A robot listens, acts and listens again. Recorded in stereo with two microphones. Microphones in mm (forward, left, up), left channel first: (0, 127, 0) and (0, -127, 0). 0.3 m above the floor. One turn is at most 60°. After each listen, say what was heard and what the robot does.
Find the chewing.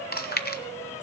The chewing: about 40° left or 140° left. Turn 40° left.
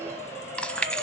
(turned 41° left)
Facing the chewing, 1 to 2 m away.